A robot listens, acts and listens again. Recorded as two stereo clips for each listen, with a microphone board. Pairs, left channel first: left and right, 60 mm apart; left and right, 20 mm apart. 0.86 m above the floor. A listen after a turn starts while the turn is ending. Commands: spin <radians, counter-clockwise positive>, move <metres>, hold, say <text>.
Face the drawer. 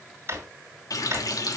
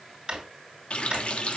spin -0.79
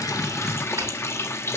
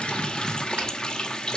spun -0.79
hold
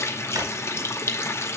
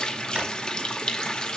hold
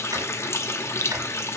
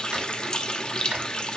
say I heard a drawer, but can't make it out now. It was about straight ahead or 90° right.